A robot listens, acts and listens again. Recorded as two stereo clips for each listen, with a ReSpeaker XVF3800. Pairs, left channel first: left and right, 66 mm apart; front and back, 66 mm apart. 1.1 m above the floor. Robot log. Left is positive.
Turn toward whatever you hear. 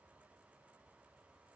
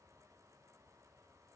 cmd idle
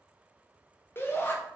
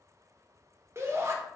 note: The shout: 140° left.
cmd yaw +140
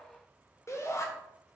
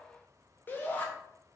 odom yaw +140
note: The shout is now 55° left.
cmd yaw +55
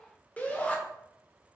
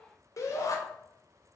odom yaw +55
note: The shout is now 25° left.
cmd yaw +25
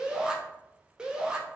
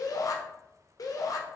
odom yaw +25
note: The shout is now 10° right.
cmd yaw -10
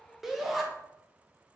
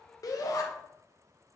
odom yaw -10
end: Facing the shout, under 1 m away.